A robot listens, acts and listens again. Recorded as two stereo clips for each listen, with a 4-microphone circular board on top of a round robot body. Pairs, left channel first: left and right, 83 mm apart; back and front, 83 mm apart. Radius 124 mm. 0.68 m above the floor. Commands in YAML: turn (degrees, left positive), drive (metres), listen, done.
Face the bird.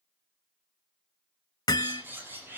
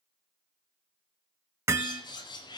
turn: -155
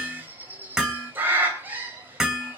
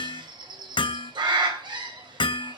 turn: -25
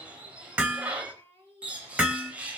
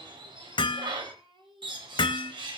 turn: -15
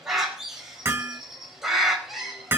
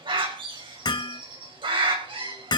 done: "Facing the bird, over 4 m away."